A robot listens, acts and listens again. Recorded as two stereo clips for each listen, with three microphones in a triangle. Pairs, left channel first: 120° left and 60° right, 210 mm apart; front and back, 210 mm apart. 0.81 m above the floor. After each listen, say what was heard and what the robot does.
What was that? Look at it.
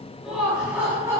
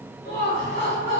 The laughter: 15° left. Turn 15° left.
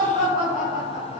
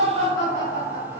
The laughter is now 10° right. Turn 10° right.
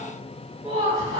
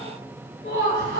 Found it: laughter, straight ahead, 2 to 4 m away.